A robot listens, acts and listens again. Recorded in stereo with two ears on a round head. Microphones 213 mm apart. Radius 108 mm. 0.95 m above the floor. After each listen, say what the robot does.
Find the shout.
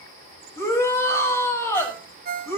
Turn 30° left.
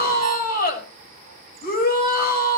Turn 140° left.
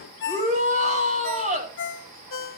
Turn 30° right.
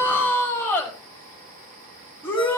Turn 10° left.
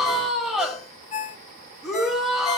Facing the shout.